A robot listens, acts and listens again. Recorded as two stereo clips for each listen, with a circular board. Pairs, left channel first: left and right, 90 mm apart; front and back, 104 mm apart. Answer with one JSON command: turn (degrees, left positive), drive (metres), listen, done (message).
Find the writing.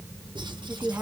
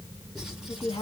{"turn": -95}
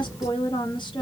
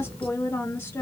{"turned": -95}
{"listen": true}
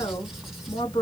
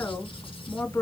{"listen": true}
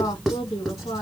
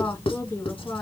{"done": "Found it: writing, straight ahead, 1 to 2 m away."}